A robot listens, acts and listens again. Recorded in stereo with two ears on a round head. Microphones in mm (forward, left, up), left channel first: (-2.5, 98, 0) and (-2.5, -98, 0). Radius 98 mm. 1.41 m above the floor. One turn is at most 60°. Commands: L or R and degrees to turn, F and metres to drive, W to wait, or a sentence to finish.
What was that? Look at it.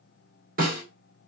R40
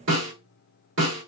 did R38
R60
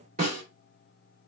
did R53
R40
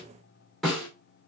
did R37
Found it: a snare drum, straight ahead.